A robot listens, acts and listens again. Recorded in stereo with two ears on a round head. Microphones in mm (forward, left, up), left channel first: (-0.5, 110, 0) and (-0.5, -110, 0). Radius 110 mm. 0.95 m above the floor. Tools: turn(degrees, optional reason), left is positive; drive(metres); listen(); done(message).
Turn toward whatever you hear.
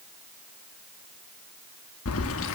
turn(degrees=55, reason="The keys jangling: about 55° left or 125° left.")
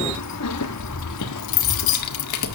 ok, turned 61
turn(degrees=80, reason="So it is at 80° left.")
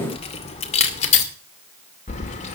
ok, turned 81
turn(degrees=30, reason="The keys jangling is now 30° left.")
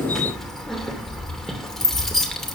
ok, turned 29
done("Facing the keys jangling.")